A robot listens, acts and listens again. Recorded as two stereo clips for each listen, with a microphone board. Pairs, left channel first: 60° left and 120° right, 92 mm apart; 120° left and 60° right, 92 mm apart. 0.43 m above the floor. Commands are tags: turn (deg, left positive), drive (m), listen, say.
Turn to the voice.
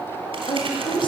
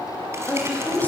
<turn deg="50"/>
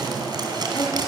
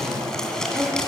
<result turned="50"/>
<turn deg="10"/>
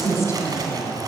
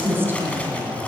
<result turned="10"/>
<say>Facing the woman speaking.</say>